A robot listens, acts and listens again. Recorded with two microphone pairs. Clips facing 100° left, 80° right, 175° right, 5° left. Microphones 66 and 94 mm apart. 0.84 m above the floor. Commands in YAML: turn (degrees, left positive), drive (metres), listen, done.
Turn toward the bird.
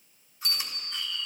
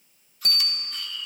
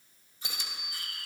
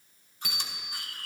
turn: -150
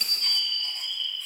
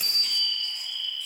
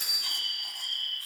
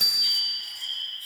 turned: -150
turn: -35
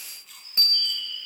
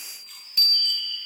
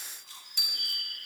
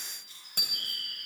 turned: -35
done: "Found it: a bird, straight ahead, over 4 m away."